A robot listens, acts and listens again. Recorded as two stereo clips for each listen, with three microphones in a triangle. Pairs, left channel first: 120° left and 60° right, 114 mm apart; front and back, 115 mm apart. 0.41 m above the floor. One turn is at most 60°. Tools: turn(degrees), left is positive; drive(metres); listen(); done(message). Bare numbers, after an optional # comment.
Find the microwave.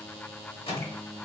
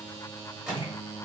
# The microwave: 95° left.
turn(60)
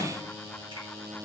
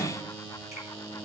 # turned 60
# The microwave is now 40° left.
turn(40)
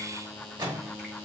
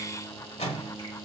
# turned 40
# The microwave is now 10° right.
turn(-10)
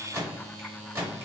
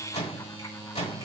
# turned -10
done("Facing the microwave.")